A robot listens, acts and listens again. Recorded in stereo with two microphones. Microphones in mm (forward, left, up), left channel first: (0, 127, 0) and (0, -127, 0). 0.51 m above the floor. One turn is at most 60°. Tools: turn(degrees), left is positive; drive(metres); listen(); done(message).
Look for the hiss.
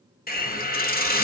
turn(degrees=35)
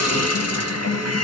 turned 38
turn(degrees=60)
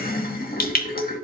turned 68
turn(degrees=35)
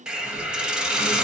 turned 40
done("Facing the hiss, under 1 m away.")